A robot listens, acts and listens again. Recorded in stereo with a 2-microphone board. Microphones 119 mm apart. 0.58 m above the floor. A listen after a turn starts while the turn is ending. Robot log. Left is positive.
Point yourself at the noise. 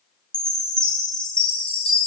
cmd yaw +30
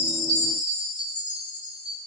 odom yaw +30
note: So it is at 140° left.
cmd yaw +140
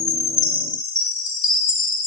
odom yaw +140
note: The chime is now 40° left.
cmd yaw +40
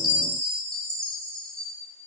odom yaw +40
note: The chime is now 10° left.
cmd yaw +10
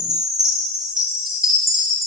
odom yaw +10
end: Found it: a chime, straight ahead.